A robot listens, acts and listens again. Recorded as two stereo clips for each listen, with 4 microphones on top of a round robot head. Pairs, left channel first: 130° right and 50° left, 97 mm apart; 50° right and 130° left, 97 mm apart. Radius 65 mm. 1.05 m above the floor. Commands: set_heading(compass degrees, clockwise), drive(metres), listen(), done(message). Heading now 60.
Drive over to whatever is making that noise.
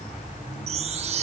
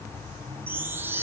set_heading(0)
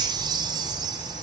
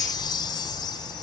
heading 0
drive(1.0)
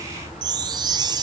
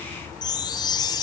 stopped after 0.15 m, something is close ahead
done("Something is in my way. I am facing the chime but have not reached it.")